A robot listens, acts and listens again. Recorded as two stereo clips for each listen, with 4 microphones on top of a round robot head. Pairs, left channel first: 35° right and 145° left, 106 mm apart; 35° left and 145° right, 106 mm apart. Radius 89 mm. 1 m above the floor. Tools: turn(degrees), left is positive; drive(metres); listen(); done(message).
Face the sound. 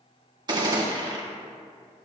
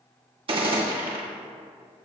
turn(degrees=-170)
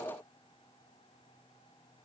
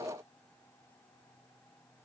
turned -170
done("Facing where the gunshot came from. I can't hear it now.")